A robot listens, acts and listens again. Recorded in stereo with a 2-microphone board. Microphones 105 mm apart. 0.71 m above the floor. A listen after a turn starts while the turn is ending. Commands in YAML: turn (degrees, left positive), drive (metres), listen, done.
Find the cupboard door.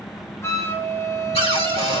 turn: 90
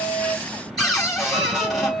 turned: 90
done: "Found it: a cupboard door, straight ahead."